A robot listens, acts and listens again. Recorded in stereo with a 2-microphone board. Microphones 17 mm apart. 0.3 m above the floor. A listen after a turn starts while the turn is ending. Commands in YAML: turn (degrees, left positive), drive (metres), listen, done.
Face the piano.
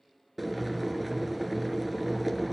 listen: true
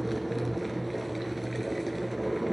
listen: true
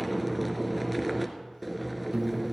turn: -65
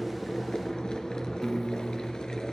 done: "Found it: a piano, straight ahead, under 1 m away."